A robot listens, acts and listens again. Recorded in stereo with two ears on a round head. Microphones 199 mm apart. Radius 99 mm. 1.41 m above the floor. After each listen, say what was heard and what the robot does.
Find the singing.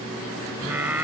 Turn 30° right.
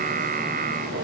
So it is at 140° right. Turn 140° right.
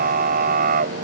The singing is now 40° right. Turn 40° right.
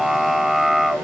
Found it: singing, straight ahead.